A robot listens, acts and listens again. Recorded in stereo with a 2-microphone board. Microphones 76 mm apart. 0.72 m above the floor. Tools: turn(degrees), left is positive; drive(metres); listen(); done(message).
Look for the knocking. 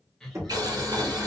turn(degrees=-40)
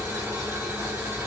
listen()
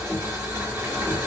listen()
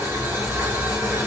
done("I heard knocking, but can't make it out now. It was about straight ahead or 100° right.")